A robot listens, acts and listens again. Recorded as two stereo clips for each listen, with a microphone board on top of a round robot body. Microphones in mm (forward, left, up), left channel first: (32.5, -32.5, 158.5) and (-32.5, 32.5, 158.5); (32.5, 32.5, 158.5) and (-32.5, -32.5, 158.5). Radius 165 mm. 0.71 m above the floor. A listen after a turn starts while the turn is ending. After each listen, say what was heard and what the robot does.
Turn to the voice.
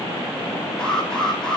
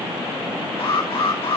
Keep listening.
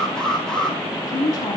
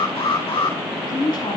Facing the woman speaking, over 4 m away.